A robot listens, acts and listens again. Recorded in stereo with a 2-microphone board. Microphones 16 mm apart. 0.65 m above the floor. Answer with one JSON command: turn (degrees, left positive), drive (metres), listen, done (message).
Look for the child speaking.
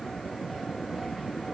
{"listen": true}
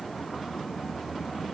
{"listen": true}
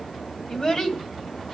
{"turn": 50}
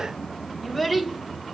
{"turn": 15}
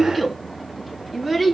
{"turn": 10}
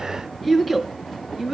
{"done": "Facing the child speaking."}